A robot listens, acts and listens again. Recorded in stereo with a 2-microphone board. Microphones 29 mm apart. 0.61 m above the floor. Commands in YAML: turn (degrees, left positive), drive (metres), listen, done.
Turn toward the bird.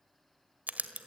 listen: true
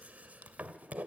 listen: true
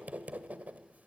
done: "I can't make out a bird, only writing."